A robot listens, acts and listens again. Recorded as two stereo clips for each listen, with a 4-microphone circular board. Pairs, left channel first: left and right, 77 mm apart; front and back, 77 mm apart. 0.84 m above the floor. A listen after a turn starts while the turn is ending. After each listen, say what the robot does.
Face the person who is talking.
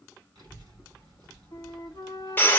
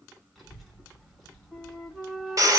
Turn 85° right.
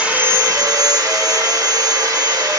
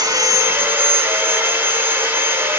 Keep listening.
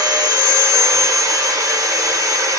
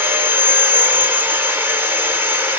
Keep listening.
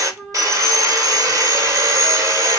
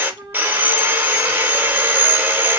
I heard a child speaking from this way, but can't make it out now.